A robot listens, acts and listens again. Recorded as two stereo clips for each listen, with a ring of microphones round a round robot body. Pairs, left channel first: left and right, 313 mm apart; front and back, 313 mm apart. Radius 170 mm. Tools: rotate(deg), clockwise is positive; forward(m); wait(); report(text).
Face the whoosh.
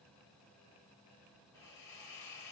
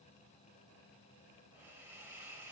wait()
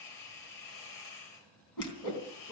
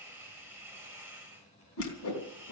rotate(-50)
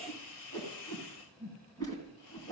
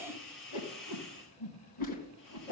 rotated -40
rotate(-10)
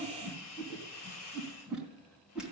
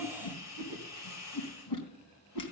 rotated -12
report("Found it: a whoosh, straight ahead, 2 to 4 m away.")